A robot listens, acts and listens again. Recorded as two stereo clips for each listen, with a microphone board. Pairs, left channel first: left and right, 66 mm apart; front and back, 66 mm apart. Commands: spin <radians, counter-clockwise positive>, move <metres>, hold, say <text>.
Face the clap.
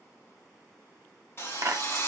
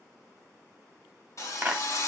spin -1.92
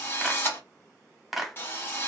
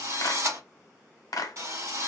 say Facing the clap.